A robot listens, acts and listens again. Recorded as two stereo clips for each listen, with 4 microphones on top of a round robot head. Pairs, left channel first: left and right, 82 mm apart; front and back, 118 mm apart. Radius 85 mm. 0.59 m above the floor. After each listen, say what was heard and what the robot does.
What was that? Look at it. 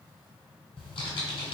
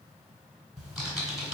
The typing on a keyboard: 95° left. Turn 95° left.
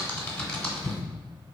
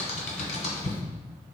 The typing on a keyboard is now 10° left. Turn 10° left.
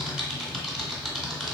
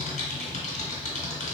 Facing the typing on a keyboard.